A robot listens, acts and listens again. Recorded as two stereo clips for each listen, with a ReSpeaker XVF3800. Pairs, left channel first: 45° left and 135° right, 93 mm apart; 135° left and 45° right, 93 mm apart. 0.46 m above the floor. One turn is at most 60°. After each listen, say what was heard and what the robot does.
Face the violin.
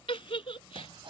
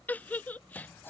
Keep listening.
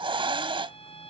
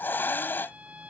The violin: 30° left. Turn 30° left.
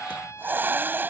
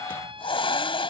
The violin is now 15° right. Turn 15° right.
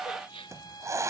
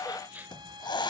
Keep listening.
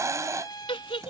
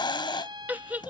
Facing the violin.